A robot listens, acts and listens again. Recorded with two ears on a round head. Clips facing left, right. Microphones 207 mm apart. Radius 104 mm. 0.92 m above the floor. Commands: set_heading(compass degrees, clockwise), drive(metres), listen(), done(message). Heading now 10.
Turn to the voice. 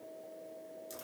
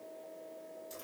listen()
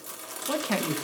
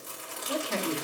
set_heading(300)
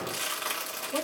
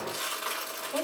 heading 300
listen()
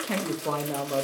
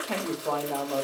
set_heading(270)
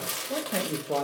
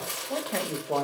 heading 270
done("Found it: a man speaking, straight ahead.")